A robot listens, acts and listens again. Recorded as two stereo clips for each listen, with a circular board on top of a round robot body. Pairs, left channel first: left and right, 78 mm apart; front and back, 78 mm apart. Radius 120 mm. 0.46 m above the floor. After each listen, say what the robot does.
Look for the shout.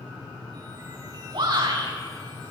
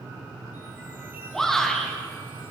Turn 85° right.
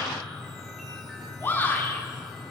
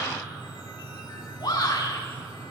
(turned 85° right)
Turn 30° left.
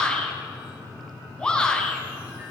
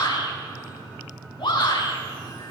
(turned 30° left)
Turn 10° left.
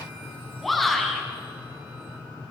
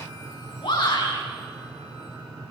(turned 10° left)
Facing the shout.